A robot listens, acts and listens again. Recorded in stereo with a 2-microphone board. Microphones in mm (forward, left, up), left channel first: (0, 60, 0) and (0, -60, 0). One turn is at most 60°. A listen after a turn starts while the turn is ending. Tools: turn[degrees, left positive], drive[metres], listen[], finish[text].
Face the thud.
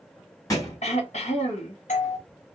Thought: The thud: about 30° left or 150° left.
Action: turn[30]
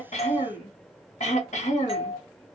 Action: listen[]
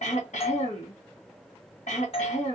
Action: finish[I heard a thud, but can't make it out now. It was about straight ahead or 120° left.]